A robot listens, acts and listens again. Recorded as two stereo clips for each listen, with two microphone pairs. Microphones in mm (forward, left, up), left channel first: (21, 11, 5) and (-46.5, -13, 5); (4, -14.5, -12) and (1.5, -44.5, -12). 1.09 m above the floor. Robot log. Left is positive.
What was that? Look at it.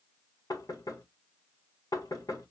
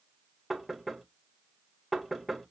end: Found it: knocking, straight ahead, 1 to 2 m away.